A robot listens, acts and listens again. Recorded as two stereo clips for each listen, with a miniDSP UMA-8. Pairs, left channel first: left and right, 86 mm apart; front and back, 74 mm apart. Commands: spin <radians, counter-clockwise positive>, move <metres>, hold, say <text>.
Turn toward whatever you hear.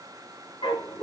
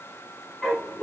spin 1.57
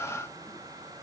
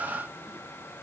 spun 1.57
hold
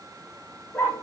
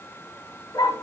spin 0.35
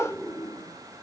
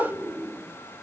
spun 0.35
say Found it: a dog barking, straight ahead, 1 to 2 m away.